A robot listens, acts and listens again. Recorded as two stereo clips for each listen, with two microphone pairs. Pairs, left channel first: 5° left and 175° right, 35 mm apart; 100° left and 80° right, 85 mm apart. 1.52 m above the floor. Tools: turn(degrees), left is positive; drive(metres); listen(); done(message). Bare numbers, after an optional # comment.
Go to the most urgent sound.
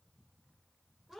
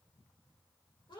listen()
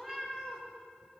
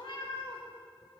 listen()
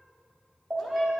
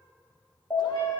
# The alarm: 150° left.
turn(150)
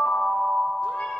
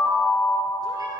drive(1.0)
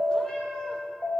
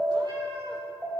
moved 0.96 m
drive(1.0)
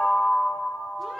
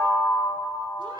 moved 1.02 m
drive(1.0)
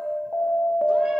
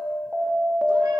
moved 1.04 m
drive(1.0)
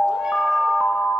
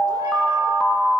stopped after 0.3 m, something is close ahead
done("Arrived at the alarm, straight ahead.")